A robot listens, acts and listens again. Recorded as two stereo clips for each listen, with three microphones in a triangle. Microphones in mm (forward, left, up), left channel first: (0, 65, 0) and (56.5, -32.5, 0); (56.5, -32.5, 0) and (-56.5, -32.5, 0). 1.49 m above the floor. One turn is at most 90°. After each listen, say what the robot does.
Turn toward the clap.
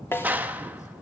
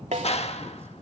Turn 15° left.
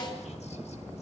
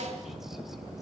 Keep listening.
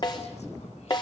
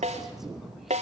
Keep listening.
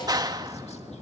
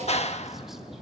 Found it: a clap, straight ahead, 1 to 2 m away.